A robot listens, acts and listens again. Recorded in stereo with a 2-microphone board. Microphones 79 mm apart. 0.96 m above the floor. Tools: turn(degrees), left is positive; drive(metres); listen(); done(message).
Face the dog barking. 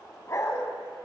turn(degrees=35)
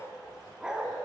turn(degrees=-10)
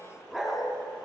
done("Found it: a dog barking, straight ahead, 2 to 4 m away.")